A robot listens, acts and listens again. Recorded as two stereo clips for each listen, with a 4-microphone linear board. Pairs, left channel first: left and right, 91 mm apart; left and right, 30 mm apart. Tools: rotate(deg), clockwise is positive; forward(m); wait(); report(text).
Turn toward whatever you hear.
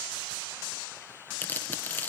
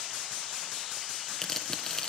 rotate(-20)
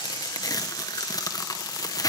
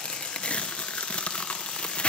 rotate(-140)
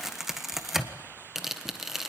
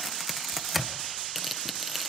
report("Found it: tearing paper, straight ahead.")